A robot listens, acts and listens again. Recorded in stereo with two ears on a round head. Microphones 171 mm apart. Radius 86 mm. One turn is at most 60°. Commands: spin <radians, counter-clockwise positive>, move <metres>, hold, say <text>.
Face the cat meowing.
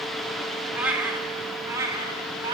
spin -0.44
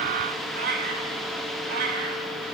spin -1.05
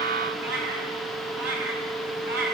spin -1.05
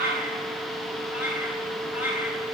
spin -0.17
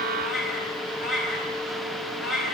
say Found it: a cat meowing, straight ahead.